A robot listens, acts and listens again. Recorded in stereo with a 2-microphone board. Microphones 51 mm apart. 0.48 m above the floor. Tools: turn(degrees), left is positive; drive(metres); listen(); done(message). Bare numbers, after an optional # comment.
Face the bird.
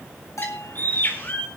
# The bird: about 40° left or 140° left.
turn(40)
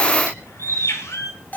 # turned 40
# So it is at 100° left.
turn(100)
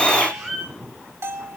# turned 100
# The bird is now 10° left.
turn(10)
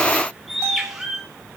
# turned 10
done("Facing the bird, over 4 m away.")